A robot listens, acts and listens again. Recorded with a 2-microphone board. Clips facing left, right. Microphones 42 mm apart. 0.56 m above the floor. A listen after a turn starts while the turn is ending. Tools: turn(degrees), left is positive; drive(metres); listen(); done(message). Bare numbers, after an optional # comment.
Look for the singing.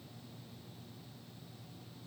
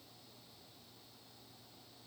listen()
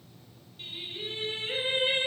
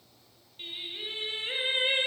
# The singing: about 25° right or 155° right.
turn(-25)
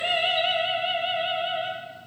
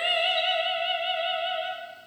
done("Facing the singing, under 1 m away.")